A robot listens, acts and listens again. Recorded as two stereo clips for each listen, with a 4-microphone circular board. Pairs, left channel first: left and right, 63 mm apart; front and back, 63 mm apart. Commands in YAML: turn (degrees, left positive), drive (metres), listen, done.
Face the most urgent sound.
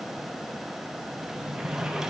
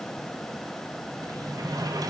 listen: true
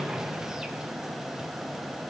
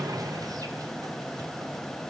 listen: true
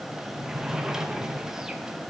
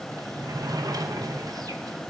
done: "I can't make out anything urgent to turn to."